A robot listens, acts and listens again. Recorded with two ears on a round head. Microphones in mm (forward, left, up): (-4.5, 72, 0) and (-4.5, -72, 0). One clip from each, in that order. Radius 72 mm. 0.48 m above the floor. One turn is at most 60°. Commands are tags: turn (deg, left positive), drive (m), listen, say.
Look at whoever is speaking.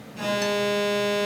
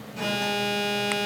<listen/>
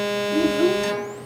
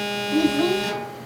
<turn deg="-60"/>
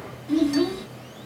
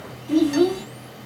<turn deg="-55"/>
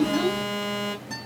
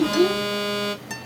<turn deg="10"/>
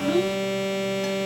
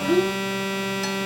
<say>Facing the child speaking.</say>